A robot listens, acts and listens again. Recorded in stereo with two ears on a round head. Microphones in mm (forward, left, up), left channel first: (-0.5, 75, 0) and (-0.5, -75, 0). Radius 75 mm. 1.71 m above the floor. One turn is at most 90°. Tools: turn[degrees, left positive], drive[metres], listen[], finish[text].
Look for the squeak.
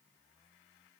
Action: listen[]
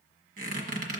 Thought: The squeak: about 55° right or 125° right.
Action: turn[-55]
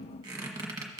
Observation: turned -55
Thought: So it is at 30° right.
Action: turn[-30]
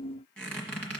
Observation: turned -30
Action: finish[Facing the squeak, 1 to 2 m away.]